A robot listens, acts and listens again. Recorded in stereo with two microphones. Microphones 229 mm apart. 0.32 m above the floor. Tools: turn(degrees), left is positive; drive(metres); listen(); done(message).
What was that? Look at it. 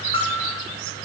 turn(degrees=25)
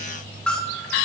done("Facing the bell.")